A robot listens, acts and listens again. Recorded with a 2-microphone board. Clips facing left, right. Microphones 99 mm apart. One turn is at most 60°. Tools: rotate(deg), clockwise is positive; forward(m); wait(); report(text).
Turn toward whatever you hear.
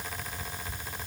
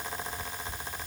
wait()
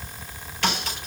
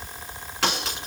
rotate(60)
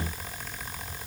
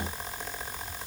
rotate(30)
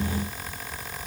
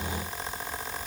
report("I heard a crack from this way, but can't make it out now.")